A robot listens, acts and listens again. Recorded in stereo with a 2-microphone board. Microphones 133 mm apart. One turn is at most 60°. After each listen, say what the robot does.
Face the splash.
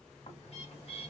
Keep listening.
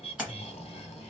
Turn 30° right.
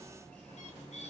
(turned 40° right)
Keep listening.
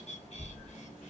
I heard a splash, but can't make it out now. It was about 30° left or 130° right.